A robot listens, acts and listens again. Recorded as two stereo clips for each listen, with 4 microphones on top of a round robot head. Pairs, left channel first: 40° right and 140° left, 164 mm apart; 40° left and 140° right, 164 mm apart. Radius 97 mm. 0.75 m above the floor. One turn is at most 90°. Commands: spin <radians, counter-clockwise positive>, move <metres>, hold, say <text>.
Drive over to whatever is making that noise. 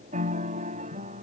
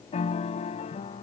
spin 1.57
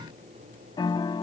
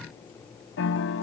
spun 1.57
spin 0.52
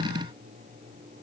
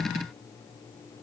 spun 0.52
hold
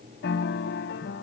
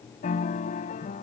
spin -0.17
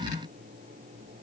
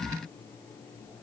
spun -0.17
hold
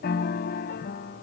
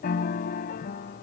move 1.0
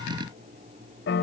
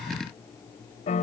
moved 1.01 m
spin -0.26
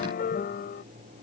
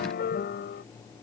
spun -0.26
move 1.0
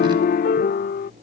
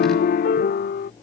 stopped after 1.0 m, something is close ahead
say I am next to the piano.